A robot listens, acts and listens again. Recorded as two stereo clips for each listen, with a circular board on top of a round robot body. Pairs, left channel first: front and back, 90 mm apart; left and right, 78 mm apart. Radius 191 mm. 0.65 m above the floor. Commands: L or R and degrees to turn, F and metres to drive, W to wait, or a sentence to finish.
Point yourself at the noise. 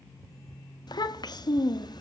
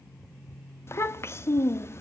L35
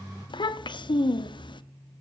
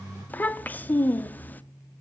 L25
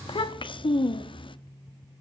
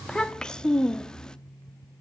L10
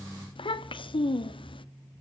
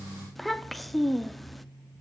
Found it: a child speaking, straight ahead, 1 to 2 m away.